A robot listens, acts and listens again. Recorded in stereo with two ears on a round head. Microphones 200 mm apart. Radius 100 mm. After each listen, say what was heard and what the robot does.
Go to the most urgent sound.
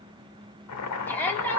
Turn 30° left.
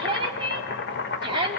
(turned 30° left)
So it is at 25° right. Turn 25° right.
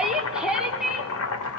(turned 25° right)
Drive 1.0 m forward.
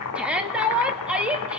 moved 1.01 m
Drive 1.0 m forward.
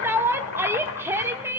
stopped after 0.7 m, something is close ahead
The shout is now 15° right. Turn 15° right.
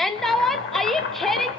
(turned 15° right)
I am next to the shout.